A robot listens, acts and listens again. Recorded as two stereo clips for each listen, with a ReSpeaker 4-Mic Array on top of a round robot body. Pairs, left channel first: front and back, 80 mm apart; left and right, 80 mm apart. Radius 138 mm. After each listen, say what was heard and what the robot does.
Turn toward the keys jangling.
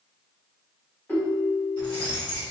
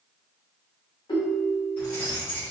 The keys jangling: 25° left. Turn 25° left.
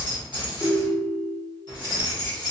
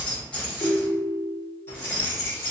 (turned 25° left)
The keys jangling is now 40° left. Turn 40° left.
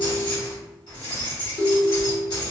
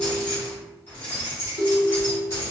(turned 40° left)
The keys jangling is now 30° left. Turn 30° left.
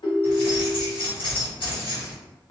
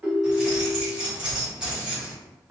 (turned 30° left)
The keys jangling is now 10° right. Turn 10° right.
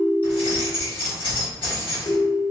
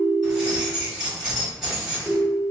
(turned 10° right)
Found it: keys jangling, straight ahead, 1 to 2 m away.